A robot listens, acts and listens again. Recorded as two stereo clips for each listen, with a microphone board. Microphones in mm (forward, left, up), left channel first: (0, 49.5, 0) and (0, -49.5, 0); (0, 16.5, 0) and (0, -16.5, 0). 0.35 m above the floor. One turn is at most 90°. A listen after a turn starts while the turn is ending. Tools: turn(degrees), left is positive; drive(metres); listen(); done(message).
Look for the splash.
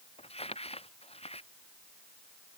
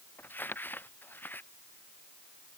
listen()
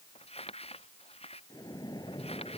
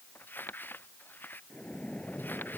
turn(degrees=40)
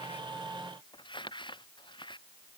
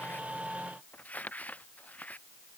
listen()
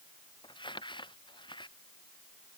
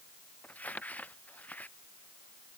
done("I heard a splash, but can't make it out now. It was about straight ahead or 100° left.")